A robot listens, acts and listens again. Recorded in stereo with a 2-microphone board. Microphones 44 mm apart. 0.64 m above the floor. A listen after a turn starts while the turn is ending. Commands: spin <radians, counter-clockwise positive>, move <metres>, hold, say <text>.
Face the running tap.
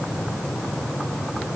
hold
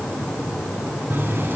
spin -0.96
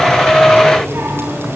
spin -1.13
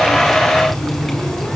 say Found it: a running tap, straight ahead, over 4 m away.